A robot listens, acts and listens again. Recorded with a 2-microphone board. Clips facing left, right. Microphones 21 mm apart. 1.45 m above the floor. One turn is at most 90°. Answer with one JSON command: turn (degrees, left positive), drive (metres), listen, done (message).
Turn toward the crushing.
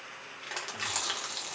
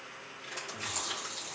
{"turn": 90}
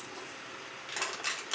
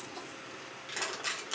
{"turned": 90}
{"turn": 10}
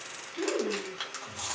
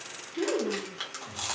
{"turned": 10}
{"done": "Facing the crushing, 1 to 2 m away."}